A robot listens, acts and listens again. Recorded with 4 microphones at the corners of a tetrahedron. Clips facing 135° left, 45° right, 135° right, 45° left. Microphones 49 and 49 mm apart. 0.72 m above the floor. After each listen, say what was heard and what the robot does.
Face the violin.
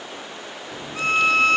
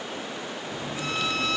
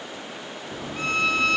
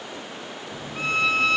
The violin: 130° left. Turn 130° left.
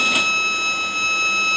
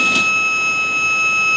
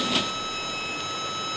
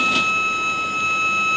The violin is now 15° left. Turn 15° left.
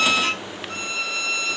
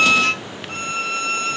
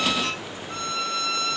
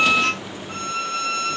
Found it: a violin, straight ahead.